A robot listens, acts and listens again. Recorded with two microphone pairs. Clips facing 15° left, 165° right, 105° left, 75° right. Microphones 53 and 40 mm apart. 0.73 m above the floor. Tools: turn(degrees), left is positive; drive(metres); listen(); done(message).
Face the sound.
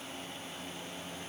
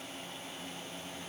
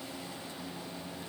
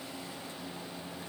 listen()
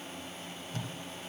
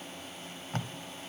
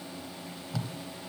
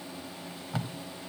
turn(degrees=-130)
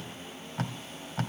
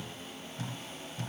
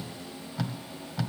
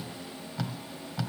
turn(degrees=15)
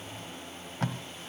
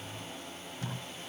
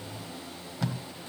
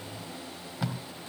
done("Found it: tape being pulled, straight ahead, 1 to 2 m away.")